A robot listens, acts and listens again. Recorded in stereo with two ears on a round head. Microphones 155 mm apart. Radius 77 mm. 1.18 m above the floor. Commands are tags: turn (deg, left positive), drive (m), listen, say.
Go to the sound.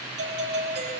<turn deg="-65"/>
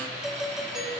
<drive m="1.0"/>
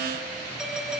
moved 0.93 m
<drive m="1.0"/>
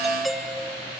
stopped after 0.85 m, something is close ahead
<say>I am next to the doorbell.</say>